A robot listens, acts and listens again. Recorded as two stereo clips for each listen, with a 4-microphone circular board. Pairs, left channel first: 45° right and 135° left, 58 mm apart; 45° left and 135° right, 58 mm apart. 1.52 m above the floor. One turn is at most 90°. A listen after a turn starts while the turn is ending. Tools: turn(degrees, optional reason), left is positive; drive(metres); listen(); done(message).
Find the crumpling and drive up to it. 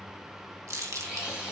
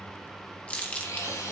turn(degrees=90, reason="The crumpling: 115° left.")
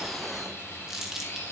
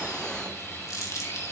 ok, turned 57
turn(degrees=55, reason="The crumpling is now 55° left.")
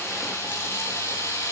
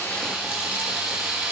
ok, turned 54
listen()
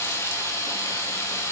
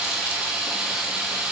listen()
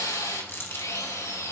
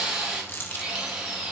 drive(metres=1.0)
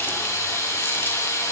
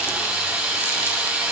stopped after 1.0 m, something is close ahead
listen()
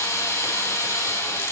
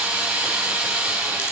listen()
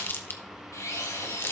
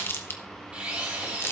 done("I am next to the crumpling.")